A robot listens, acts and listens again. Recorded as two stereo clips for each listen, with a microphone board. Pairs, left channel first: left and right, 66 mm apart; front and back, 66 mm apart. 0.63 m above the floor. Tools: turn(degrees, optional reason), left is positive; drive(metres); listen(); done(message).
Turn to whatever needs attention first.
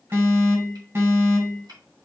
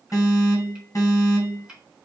turn(degrees=-40, reason="The alarm: 40° right.")
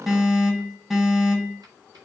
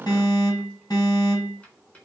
turn(degrees=-10, reason="The alarm is now 10° right.")
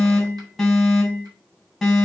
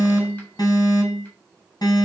done("Facing the alarm.")